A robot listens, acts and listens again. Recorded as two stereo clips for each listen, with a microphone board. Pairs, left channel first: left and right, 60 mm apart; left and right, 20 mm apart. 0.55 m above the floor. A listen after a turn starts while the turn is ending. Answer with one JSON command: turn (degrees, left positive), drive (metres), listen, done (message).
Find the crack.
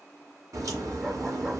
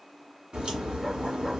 {"turn": -65}
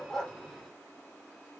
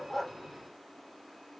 {"listen": true}
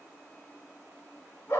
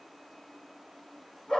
{"done": "I heard a crack, but can't make it out now. It was about straight ahead or 50° right."}